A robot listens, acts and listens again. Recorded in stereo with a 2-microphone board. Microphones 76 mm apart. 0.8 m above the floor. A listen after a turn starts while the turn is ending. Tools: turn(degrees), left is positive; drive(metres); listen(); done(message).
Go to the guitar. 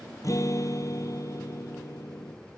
turn(degrees=45)
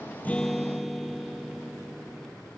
drive(metres=1.0)
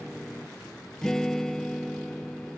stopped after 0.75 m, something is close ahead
done("Blocked. The guitar is further on, straight ahead.")